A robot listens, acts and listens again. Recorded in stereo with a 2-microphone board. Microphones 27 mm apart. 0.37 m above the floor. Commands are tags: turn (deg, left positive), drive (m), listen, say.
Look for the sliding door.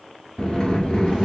<turn deg="35"/>
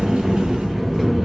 <say>Found it: a sliding door, straight ahead.</say>